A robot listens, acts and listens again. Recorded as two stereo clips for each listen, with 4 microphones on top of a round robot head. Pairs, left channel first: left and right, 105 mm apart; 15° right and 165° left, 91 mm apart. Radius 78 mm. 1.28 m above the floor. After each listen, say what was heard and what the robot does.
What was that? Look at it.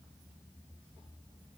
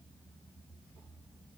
Keep listening.
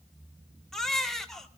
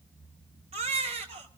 The baby crying: 175° left. Turn 175° left.
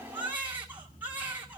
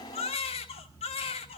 The baby crying is now 10° right. Turn 10° right.
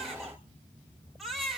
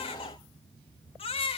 Found it: a baby crying, straight ahead.